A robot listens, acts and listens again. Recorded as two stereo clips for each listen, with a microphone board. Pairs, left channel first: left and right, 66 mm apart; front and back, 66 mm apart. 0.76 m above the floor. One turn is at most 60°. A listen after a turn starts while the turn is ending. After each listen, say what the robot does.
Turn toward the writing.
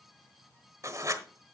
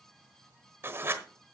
Turn 60° right.
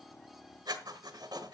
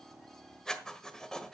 Turn 60° right.
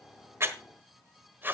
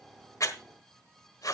Turn 30° right.
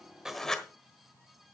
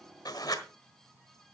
Turn 10° left.
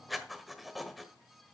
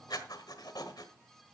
Found it: writing, straight ahead, 1 to 2 m away.